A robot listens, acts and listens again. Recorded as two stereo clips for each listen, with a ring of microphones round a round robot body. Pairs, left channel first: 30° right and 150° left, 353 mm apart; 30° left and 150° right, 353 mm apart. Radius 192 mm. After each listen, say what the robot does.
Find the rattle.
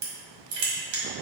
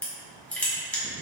Keep listening.
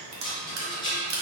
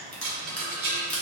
Turn 105° right.
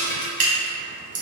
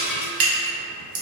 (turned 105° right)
Turn 10° right.
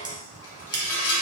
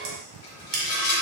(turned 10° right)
Facing the rattle.